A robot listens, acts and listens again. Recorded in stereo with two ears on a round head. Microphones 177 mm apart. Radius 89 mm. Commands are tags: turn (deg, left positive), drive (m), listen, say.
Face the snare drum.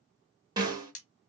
<turn deg="-20"/>
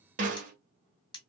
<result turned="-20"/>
<turn deg="-140"/>
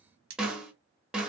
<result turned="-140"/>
<say>Found it: a snare drum, straight ahead.</say>